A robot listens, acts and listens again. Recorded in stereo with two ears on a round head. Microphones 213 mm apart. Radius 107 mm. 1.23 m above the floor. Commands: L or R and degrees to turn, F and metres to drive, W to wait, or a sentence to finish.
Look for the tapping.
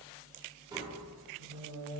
R15
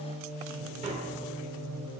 W
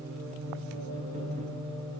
W
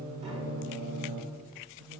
I heard tapping, but can't make it out now. It was about straight ahead or 150° right.